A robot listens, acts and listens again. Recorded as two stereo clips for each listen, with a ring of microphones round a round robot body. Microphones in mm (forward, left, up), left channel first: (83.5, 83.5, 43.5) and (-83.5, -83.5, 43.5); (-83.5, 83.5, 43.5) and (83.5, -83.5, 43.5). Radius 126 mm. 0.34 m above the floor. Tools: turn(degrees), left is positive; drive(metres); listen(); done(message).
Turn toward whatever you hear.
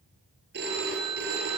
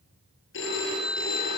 turn(degrees=175)
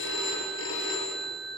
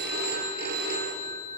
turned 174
done("Facing the phone ringing.")